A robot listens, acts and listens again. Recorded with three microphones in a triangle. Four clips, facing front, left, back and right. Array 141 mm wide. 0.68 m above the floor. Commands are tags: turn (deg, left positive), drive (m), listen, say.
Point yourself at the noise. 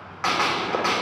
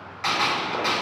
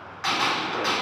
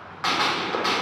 <turn deg="-25"/>
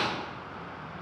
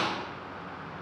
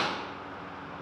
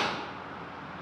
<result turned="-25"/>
<say>Facing where the gunshot came from. I can't hear it now.</say>